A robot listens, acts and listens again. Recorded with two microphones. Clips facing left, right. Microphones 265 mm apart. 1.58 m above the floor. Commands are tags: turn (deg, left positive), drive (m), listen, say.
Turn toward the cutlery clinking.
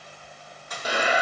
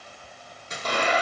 <turn deg="-25"/>
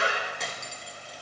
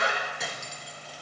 <say>Found it: cutlery clinking, straight ahead, 1 to 2 m away.</say>